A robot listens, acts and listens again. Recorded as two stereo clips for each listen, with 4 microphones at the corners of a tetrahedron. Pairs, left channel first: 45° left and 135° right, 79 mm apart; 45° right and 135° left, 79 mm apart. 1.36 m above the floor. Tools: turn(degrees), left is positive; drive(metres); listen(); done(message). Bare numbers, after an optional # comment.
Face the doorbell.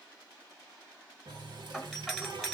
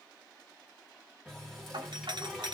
# The doorbell: 140° left.
turn(140)
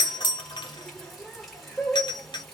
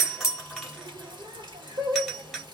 # The doorbell is now 45° left.
turn(45)
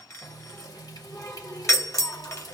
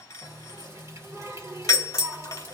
done("Found it: a doorbell, straight ahead.")